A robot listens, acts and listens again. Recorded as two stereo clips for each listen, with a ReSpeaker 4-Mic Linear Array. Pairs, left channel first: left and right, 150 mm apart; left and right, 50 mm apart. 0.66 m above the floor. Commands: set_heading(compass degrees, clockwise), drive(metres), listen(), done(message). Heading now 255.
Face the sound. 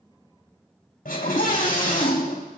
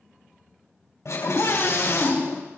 set_heading(180)
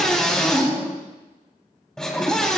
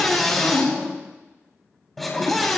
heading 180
done("Found it: a scream, straight ahead.")